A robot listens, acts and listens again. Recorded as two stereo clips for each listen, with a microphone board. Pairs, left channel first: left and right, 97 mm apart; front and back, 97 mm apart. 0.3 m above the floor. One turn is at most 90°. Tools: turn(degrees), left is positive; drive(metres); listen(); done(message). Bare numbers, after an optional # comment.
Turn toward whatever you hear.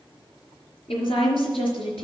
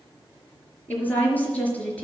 # The woman speaking: 75° left.
turn(75)
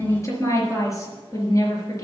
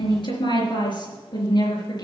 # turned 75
# The woman speaking is now 40° left.
turn(40)
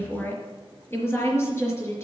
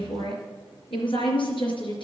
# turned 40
# The woman speaking is now 30° left.
turn(30)
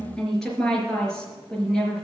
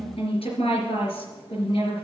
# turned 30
done("Found it: a woman speaking, straight ahead.")